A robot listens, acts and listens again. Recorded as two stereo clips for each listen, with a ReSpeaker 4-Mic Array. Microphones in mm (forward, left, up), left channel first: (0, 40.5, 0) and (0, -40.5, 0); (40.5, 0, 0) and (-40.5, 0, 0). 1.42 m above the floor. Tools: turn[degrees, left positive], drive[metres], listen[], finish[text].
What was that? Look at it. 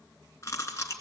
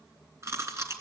Thought: The chewing: 135° left.
Action: turn[135]
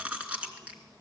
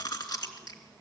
Thought: The chewing is now 20° right.
Action: turn[-20]
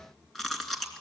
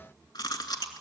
Action: finish[Facing the chewing, 2 to 4 m away.]